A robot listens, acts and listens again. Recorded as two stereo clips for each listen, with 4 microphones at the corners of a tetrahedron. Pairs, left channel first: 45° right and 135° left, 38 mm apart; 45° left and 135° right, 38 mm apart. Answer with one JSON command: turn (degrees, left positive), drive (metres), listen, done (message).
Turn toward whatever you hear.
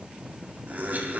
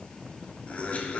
{"turn": 95}
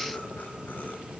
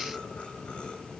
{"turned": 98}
{"turn": -10}
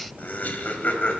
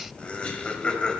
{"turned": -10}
{"turn": -15}
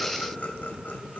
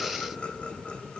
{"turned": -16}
{"turn": -10}
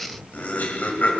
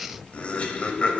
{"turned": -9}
{"turn": -10}
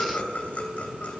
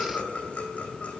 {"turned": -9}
{"done": "Facing the laughter."}